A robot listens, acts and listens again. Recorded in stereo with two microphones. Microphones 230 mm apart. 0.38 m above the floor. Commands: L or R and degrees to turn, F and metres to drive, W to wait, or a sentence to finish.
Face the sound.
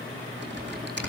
R50
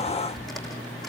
Facing the typing on a keyboard.